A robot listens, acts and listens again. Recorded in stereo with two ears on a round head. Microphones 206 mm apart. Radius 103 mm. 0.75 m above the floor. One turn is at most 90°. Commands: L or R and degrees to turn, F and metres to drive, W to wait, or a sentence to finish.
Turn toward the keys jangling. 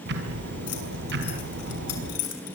L90
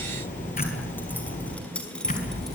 Found it: keys jangling, straight ahead, over 4 m away.